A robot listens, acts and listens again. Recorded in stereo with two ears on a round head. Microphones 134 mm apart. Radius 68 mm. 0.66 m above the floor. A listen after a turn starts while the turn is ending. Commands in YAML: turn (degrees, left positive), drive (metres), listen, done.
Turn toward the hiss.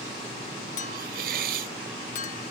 turn: -60
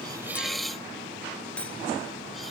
done: "Found it: a hiss, straight ahead."